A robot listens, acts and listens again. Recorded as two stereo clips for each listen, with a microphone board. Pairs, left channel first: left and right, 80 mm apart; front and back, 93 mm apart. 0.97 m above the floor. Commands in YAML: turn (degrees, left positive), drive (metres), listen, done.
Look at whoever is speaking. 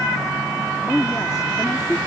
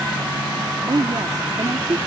turn: 135
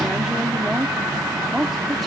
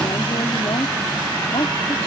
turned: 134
done: "Facing the woman speaking."